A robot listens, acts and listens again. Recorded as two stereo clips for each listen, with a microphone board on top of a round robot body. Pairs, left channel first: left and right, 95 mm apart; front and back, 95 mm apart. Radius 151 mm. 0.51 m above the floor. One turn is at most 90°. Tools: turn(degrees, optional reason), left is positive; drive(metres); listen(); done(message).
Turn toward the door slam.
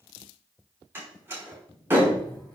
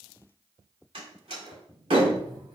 turn(degrees=-90, reason="The door slam: 155° right.")
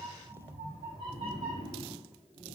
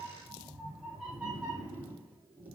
turn(degrees=-65, reason="Nothing new. It was at 65° right.")
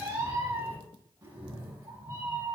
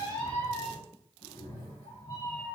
done("Facing where the door slam came from. I can't hear it now.")